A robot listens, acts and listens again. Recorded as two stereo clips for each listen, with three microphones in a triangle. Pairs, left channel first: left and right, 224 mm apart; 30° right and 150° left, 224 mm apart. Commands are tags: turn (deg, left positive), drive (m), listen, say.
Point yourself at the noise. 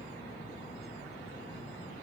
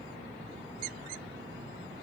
<listen/>
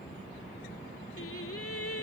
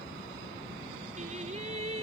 <turn deg="90"/>
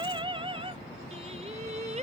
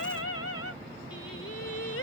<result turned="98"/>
<turn deg="-30"/>
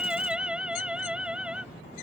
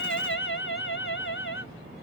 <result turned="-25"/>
<say>Found it: singing, straight ahead.</say>